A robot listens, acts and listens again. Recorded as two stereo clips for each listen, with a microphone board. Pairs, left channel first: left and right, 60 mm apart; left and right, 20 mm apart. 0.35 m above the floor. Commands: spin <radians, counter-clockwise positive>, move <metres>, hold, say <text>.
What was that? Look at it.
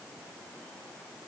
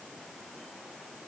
hold
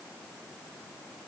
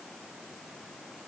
hold
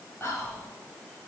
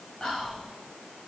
spin 0.79
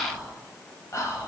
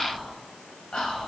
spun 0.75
spin 1.40
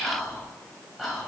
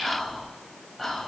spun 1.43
say Facing the whispering.